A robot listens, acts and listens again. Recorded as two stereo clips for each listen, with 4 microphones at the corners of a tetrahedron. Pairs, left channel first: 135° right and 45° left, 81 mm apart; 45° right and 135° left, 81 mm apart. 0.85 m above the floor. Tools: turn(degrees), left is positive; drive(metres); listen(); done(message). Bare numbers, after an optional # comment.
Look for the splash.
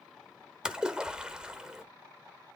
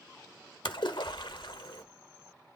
# The splash: 35° right.
turn(-35)
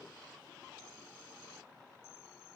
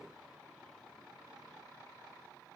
done("I heard a splash from this way, but can't make it out now.")